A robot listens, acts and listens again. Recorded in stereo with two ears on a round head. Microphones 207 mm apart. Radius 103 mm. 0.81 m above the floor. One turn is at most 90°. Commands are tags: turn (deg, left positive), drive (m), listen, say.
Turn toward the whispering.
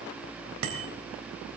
<listen/>
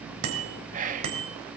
<turn deg="-35"/>
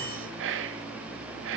<turn deg="-90"/>
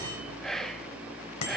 <say>Found it: whispering, straight ahead.</say>